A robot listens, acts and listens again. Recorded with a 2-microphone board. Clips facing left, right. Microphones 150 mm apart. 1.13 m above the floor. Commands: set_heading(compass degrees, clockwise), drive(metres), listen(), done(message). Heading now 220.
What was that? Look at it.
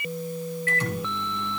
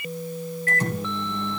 set_heading(260)
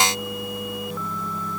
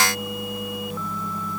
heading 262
listen()
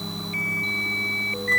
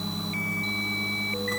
done("Found it: a microwave, straight ahead, 2 to 4 m away.")